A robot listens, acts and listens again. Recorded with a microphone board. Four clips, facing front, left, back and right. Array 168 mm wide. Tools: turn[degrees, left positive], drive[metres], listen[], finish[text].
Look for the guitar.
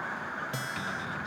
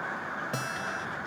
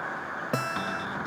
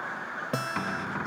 Thought: The guitar: 155° right.
Action: turn[-155]
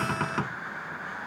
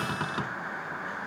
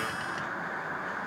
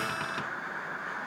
Action: listen[]
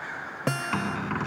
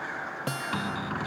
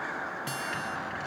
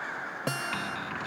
Thought: The guitar is now 15° right.
Action: turn[-15]
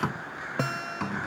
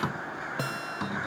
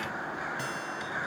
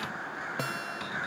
Action: finish[Found it: a guitar, straight ahead.]